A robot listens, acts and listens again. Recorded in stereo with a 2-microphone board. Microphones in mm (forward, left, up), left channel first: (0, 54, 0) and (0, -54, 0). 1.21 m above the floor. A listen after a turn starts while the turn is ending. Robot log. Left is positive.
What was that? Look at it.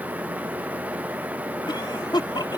note: The cough: about 45° left or 135° left.
cmd yaw +45
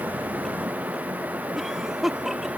end: Facing the cough.